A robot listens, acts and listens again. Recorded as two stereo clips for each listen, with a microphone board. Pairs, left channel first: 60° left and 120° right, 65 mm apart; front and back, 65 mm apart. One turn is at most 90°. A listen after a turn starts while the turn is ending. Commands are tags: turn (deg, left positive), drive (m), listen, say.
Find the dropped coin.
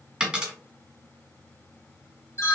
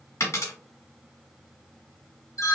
<turn deg="-45"/>
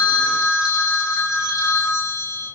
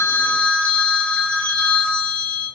<say>I heard a dropped coin from this way, but can't make it out now.</say>